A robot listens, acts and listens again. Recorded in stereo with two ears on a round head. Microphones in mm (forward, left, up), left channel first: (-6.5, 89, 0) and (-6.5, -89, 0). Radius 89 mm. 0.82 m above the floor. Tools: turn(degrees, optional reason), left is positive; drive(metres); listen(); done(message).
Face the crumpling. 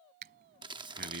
turn(degrees=-25, reason="The crumpling: about 25° right or 155° right.")
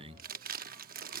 turn(degrees=-135, reason="So it is at 135° right.")
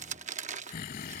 turn(degrees=-35, reason="The crumpling is now 35° right.")
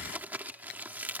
turn(degrees=-10, reason="The crumpling is now 10° right.")
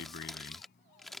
done("Facing the crumpling.")